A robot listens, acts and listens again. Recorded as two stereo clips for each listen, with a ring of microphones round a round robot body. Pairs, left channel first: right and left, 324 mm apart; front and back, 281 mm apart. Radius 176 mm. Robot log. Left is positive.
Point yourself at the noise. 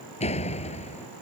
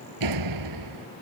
note: The door slam: 160° right.
cmd yaw -160
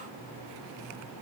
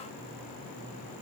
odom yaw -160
end: I heard a door slam from this way, but can't make it out now.